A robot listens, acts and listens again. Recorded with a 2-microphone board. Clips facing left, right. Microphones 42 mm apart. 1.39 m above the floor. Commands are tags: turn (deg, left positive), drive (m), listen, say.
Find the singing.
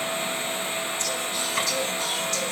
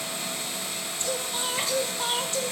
<turn deg="-25"/>
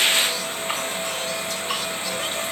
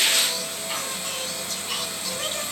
<listen/>
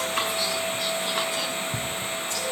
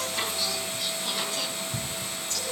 <listen/>
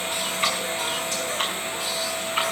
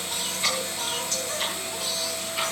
<say>I heard singing, but can't make it out now. It was about straight ahead or 130° right.</say>